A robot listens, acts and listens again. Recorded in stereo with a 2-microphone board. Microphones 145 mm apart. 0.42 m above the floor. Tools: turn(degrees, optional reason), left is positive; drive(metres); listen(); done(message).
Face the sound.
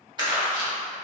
turn(degrees=-35, reason="The crumpling: about 35° right or 145° right.")
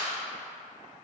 listen()
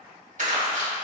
turn(degrees=-110, reason="So it is at 110° right.")
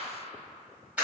turn(degrees=-10, reason="The crumpling is now 10° right.")
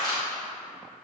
done("Facing the crumpling.")